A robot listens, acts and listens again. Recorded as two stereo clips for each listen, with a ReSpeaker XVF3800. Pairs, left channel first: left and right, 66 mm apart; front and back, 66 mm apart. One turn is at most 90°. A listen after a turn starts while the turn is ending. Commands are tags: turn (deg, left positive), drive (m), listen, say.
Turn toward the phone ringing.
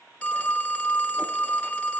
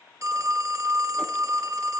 <turn deg="90"/>
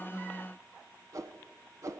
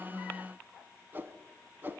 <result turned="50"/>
<turn deg="90"/>
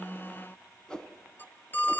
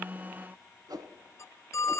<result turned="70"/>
<turn deg="35"/>
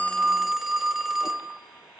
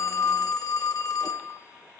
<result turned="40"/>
<say>Found it: a phone ringing, straight ahead.</say>